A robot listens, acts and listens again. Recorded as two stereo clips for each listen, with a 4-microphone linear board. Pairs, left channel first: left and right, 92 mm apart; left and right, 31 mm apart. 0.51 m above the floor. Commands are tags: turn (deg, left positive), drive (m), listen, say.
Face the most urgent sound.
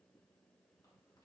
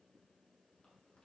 <listen/>
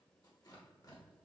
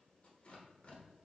<listen/>
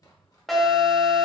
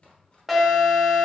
<turn deg="30"/>
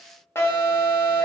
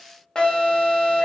<turn deg="150"/>
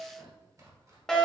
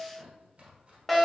<say>Facing the alarm.</say>